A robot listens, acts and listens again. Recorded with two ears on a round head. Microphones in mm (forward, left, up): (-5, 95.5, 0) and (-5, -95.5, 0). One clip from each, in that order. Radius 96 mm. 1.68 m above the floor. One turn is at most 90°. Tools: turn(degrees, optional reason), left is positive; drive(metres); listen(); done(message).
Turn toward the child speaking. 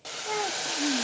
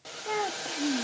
turn(degrees=30)
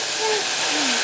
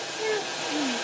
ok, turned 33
listen()
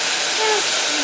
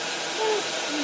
listen()
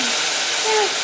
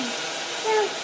turn(degrees=90, reason="So it is at 125° left.")
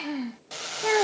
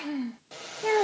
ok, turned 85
turn(degrees=15, reason="The child speaking is now 15° left.")
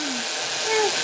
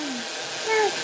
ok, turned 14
turn(degrees=-10, reason="The child speaking is now 10° right.")
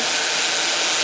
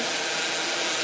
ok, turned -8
listen()
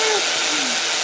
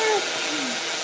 listen()
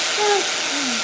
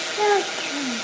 done("Facing the child speaking.")